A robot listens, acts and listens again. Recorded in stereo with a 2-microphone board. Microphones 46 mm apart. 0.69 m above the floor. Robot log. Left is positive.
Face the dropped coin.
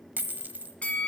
note: The dropped coin: about 40° right or 140° right.
cmd yaw -40
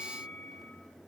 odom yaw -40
cmd idle
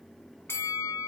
end: I heard a dropped coin, but can't make it out now. It was about straight ahead or 100° right.